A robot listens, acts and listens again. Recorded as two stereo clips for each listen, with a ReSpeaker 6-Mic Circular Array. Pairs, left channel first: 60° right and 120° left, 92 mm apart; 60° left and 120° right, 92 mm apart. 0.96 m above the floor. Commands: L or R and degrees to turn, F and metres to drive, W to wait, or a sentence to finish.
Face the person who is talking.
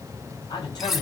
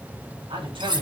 R95
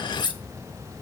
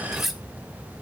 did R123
L25
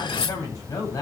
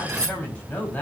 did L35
R10
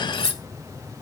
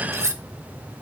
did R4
R10
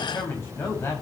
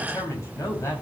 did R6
Found it: a man speaking, straight ahead.